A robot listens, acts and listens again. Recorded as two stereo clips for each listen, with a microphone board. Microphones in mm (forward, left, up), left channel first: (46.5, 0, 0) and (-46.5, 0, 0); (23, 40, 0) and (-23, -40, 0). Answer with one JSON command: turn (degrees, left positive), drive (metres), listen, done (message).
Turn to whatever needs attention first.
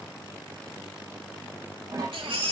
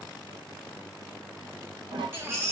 {"turn": 180}
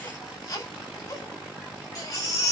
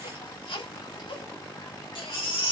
{"turn": 50}
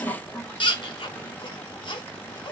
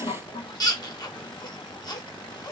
{"turn": 20}
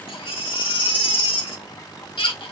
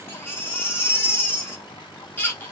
{"done": "Facing the baby crying."}